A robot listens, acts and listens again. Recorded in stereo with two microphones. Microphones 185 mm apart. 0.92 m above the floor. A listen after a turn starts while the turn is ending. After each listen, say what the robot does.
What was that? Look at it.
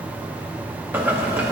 Turn 30° right.
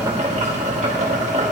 Turn 140° right.
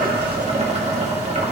Turn 40° right.
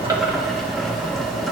Facing the boiling.